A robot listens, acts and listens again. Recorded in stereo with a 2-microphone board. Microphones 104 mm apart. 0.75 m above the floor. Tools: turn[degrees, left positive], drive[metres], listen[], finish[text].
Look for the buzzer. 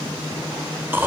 Action: listen[]
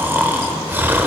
Action: listen[]
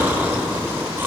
Action: finish[I can't make out a buzzer to turn to.]